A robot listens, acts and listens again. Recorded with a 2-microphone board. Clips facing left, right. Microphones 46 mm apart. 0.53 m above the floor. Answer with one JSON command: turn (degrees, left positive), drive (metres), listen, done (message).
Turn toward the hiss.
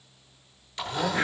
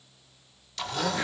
{"listen": true}
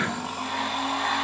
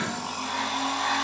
{"listen": true}
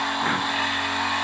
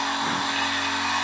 {"done": "I can't make out a hiss to turn to."}